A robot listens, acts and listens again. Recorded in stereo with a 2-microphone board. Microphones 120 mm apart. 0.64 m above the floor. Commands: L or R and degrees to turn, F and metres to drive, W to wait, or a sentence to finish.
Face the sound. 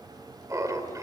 R30
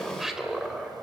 Facing the laughter, 2 to 4 m away.